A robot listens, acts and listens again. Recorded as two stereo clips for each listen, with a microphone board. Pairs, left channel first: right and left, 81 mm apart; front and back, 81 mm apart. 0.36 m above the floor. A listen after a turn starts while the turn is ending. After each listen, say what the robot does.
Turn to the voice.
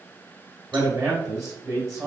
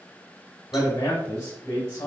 Turn 50° left.
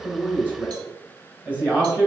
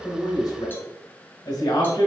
Turn 20° left.
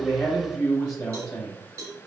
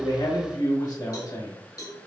Found it: a man speaking, straight ahead.